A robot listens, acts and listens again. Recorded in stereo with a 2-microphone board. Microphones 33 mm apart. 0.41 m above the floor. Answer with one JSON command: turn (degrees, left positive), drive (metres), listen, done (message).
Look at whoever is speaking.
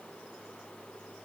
{"listen": true}
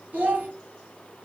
{"turn": -75}
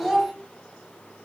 {"turn": -10}
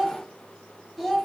{"done": "Found it: a child speaking, straight ahead."}